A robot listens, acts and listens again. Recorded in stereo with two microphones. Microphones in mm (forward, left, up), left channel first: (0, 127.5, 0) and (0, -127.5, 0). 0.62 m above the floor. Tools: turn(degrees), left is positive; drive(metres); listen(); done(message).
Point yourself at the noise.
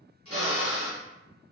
turn(degrees=-65)
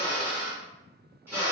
turn(degrees=-10)
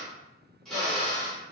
done("Facing the drill.")